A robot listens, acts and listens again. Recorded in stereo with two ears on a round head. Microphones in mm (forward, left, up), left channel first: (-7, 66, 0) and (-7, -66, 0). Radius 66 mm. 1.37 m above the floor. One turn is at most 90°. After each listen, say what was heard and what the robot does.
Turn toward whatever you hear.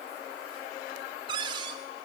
The cupboard door: about 30° right or 150° right. Turn 30° right.
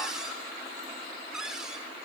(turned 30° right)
Found it: a cupboard door, straight ahead.